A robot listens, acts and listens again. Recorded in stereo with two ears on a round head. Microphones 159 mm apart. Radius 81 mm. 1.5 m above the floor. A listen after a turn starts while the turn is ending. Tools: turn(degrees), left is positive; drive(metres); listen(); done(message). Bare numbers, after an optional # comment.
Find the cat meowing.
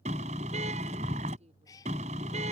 # The cat meowing: about 20° left or 160° left.
turn(20)
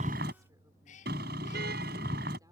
# So it is at 135° left.
turn(135)
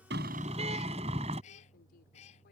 # The cat meowing is now 35° left.
turn(35)
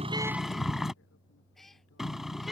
done("Facing the cat meowing.")